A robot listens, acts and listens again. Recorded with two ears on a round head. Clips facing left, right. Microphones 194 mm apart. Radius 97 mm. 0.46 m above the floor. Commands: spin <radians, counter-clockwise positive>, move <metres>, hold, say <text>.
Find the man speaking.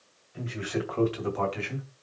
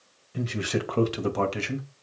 spin -0.96
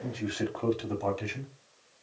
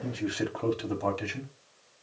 say Facing the man speaking.